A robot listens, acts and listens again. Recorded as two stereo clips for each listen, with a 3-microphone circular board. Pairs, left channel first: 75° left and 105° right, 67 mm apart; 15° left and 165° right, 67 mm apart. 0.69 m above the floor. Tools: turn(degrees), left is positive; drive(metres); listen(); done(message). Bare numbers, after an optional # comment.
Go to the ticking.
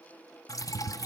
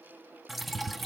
# The ticking: 75° left.
turn(75)
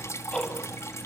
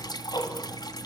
drive(1.0)
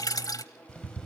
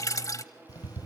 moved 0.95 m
drive(1.0)
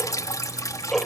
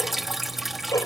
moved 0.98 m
# The ticking is now 10° right.
turn(-10)
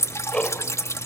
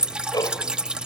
drive(1.0)
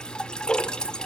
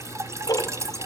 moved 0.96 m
drive(1.0)
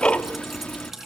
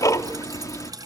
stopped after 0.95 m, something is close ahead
done("I am next to the ticking.")